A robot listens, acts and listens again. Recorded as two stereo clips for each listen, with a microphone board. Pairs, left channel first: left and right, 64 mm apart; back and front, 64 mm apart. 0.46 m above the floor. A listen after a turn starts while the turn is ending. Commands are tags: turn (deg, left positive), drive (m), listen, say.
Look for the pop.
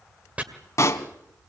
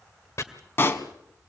<turn deg="125"/>
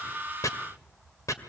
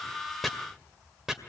<say>Facing where the pop came from. I can't hear it now.</say>